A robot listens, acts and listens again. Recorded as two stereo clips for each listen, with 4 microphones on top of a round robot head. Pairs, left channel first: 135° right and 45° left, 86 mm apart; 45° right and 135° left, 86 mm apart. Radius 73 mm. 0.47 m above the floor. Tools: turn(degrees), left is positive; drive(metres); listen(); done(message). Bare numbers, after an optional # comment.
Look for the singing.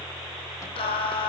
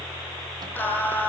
# The singing: 115° right.
turn(-115)
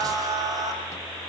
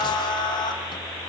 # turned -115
done("Found it: singing, straight ahead.")